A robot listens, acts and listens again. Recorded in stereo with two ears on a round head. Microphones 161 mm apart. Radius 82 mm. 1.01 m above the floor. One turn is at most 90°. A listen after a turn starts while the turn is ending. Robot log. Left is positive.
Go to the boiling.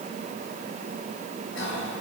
cmd idle
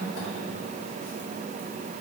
cmd idle
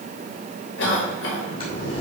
note: The boiling: about 30° left or 150° left.
cmd yaw +30
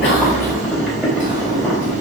cmd fwd 1.0
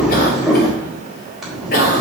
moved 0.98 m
cmd fwd 1.0
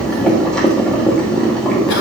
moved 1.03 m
cmd fwd 1.0
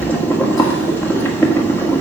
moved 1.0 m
note: The boiling is now 10° left.
cmd yaw +10
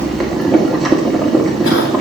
cmd fwd 1.0
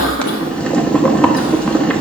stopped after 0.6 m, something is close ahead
end: Arrived at the boiling, straight ahead.